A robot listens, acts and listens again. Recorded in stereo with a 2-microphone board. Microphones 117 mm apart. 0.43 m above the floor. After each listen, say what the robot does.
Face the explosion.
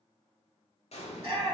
Turn 65° left.
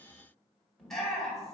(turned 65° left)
Keep listening.
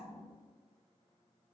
I heard an explosion, but can't make it out now. It was about straight ahead or 50° left.